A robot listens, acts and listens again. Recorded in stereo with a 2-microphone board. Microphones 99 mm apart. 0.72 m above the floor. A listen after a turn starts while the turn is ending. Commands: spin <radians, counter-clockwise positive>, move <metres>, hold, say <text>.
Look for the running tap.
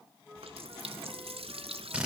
spin -1.31
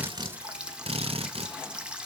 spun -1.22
spin -0.17
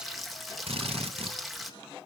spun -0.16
say Found it: a running tap, straight ahead.